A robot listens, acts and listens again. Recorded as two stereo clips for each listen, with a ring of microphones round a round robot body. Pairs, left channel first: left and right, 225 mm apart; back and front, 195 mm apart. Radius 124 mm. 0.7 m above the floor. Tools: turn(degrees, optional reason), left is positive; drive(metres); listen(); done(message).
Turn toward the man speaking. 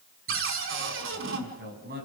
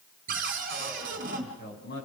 turn(degrees=-140, reason="The man speaking: 140° right.")
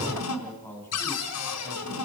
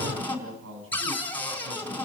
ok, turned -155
turn(degrees=10, reason="The man speaking is now 10° left.")
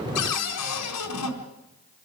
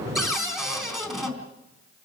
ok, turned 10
listen()
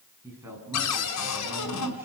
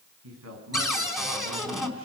turn(degrees=-10, reason="The man speaking is now 10° right.")
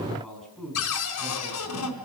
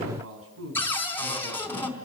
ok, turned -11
done("Found it: a man speaking, straight ahead, over 4 m away.")